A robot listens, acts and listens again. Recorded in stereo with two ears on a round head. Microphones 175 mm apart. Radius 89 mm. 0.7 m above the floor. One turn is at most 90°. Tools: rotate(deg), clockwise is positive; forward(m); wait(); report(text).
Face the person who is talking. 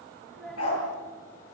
rotate(-30)
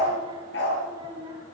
rotate(20)
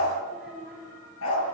report("Facing the child speaking, over 4 m away.")